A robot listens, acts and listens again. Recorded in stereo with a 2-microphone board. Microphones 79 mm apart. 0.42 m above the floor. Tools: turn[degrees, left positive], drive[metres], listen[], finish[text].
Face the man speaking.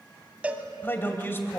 Thought: The man speaking: about 30° left or 150° left.
Action: turn[30]
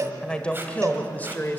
Thought: The man speaking: about 25° left or 155° left.
Action: turn[25]
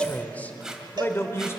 Thought: The man speaking: about 35° left or 145° left.
Action: turn[35]
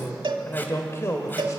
Thought: The man speaking: about 40° left or 140° left.
Action: turn[40]
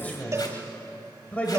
Thought: So it is at 20° left.
Action: turn[20]
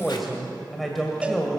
Action: finish[Facing the man speaking, 2 to 4 m away.]